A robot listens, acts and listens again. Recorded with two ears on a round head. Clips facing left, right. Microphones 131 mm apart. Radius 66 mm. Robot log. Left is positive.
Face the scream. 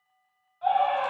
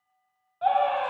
note: The scream: about 65° right or 115° right.
cmd yaw -65
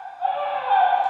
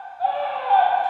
note: So it is at 40° right.
cmd yaw -40
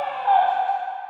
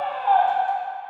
end: Facing the scream.